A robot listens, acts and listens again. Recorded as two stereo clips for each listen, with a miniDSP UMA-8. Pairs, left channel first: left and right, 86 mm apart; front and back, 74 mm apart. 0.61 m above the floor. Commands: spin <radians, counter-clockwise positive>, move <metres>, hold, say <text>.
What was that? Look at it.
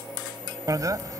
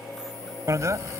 spin -2.36
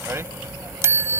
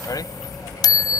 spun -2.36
spin -0.52
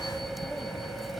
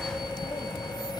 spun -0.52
say Facing the bicycle bell.